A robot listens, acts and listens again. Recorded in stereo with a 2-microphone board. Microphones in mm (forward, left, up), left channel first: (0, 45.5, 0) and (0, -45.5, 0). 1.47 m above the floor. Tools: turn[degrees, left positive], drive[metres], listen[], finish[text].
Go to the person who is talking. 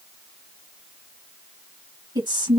Thought: The woman speaking: about 60° right or 120° right.
Action: turn[-60]
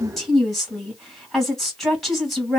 Action: drive[1.0]
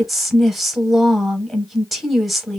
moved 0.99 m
Action: drive[1.0]
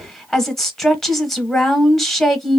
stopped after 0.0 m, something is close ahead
Action: finish[Arrived at the woman speaking, straight ahead.]